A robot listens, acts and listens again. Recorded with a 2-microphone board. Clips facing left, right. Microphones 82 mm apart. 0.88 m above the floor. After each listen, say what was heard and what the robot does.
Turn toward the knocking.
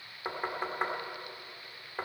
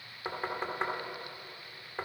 Turn 30° left.
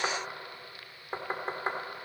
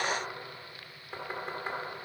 So it is at 145° left. Turn 145° left.
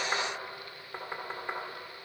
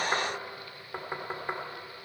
The knocking is now 10° right. Turn 10° right.
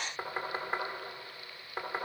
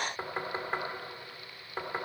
Facing the knocking.